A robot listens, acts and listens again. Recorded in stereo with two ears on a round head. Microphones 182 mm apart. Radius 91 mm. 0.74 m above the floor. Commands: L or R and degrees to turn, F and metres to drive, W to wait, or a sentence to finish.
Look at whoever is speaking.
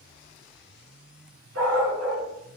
W
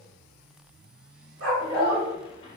L25
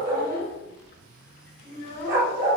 L130
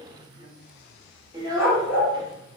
R20
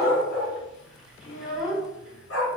Facing the child speaking.